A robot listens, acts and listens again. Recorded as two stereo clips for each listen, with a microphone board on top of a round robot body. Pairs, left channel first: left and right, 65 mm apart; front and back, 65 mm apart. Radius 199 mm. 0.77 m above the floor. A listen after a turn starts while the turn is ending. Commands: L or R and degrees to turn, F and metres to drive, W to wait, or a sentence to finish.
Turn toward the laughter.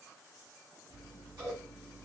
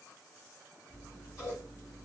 W
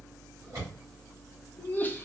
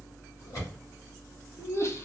L35
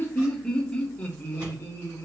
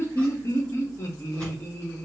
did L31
L45
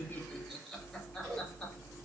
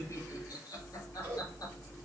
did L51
W
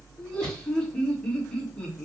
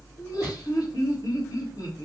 L15
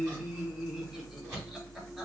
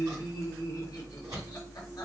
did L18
W
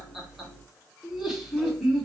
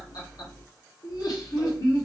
Found it: laughter, straight ahead, 1 to 2 m away.